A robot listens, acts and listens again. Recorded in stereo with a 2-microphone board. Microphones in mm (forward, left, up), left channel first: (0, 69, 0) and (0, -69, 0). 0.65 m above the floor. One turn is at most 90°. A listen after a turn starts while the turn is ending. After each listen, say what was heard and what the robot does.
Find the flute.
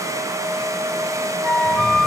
Turn 30° left.
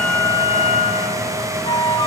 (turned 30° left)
So it is at 145° left. Turn 90° left.
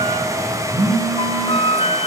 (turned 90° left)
The flute is now 45° left. Turn 45° left.
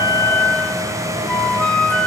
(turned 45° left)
Facing the flute.